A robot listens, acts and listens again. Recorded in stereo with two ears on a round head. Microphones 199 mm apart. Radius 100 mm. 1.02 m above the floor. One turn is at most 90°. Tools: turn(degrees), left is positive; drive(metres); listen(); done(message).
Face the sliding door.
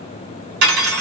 listen()
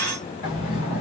turn(degrees=65)
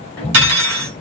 turn(degrees=15)
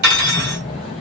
done("Facing the sliding door.")